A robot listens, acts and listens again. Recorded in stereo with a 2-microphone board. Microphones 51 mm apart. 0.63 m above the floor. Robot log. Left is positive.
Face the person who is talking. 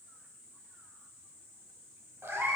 cmd idle
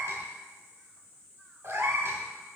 cmd idle
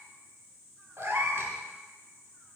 end: I can't make out anyone speaking to turn to.